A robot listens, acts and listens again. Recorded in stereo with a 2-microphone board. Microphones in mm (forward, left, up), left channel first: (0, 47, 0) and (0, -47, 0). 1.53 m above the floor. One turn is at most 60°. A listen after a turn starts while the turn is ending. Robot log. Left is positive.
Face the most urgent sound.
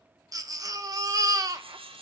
note: The baby crying: about 40° right or 140° right.
cmd yaw -40
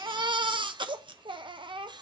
note: So it is at 95° right.
cmd yaw -60
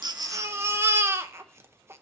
note: The baby crying is now 30° right.
cmd yaw -30
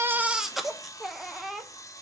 end: Found it: a baby crying, straight ahead, under 1 m away.